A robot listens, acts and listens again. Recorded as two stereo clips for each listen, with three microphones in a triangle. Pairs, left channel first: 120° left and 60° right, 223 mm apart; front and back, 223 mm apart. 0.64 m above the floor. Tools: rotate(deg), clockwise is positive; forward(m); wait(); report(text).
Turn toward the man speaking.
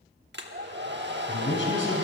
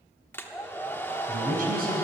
rotate(-140)
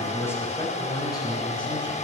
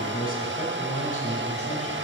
rotate(-50)
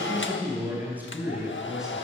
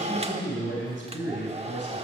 rotate(-25)
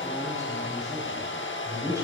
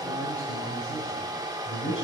rotate(-15)
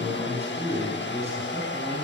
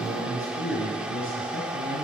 report("Found it: a man speaking, straight ahead.")